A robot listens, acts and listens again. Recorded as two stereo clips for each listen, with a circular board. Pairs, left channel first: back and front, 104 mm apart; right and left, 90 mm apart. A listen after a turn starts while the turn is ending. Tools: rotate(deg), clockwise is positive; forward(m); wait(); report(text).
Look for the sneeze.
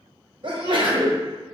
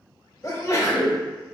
rotate(35)
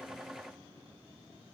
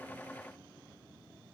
report("I heard a sneeze from this way, but can't make it out now.")